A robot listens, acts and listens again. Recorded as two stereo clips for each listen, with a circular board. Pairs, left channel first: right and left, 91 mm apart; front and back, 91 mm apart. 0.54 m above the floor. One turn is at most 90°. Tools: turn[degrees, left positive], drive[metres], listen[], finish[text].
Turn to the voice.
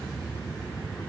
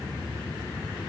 Action: listen[]
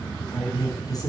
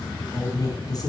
Thought: The woman speaking: 45° right.
Action: turn[-45]
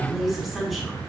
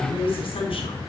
Action: finish[Facing the woman speaking.]